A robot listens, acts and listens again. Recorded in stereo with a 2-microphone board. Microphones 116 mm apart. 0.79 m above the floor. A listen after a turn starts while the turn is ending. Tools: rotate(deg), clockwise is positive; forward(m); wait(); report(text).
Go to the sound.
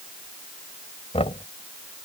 rotate(-65)
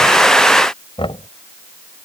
rotate(-50)
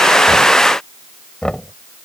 forward(1.0)
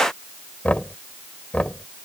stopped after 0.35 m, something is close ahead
rotate(-10)
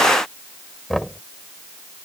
report("Blocked. The knocking is further on, straight ahead.")